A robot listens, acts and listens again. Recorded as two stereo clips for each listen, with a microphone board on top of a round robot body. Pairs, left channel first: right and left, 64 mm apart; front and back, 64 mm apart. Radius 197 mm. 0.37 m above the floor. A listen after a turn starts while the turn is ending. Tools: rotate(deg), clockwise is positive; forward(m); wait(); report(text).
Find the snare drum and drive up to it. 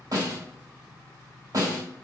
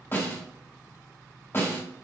rotate(-60)
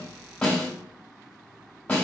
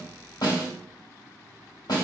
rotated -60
rotate(20)
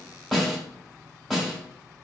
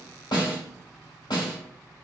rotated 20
forward(1.0)
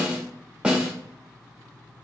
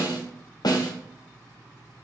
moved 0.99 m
rotate(-15)
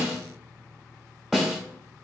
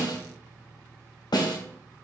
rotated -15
forward(1.0)
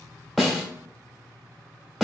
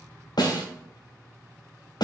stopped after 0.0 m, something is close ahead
report("I am next to the snare drum.")